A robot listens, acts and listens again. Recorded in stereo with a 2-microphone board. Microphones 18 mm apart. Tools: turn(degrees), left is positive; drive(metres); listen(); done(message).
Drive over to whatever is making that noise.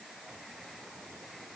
listen()
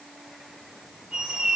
turn(degrees=-70)
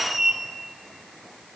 turn(degrees=-15)
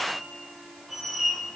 drive(metres=1.0)
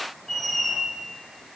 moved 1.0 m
turn(degrees=15)
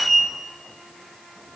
drive(metres=1.0)
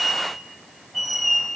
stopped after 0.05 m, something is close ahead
done("Arrived at the squeak, straight ahead.")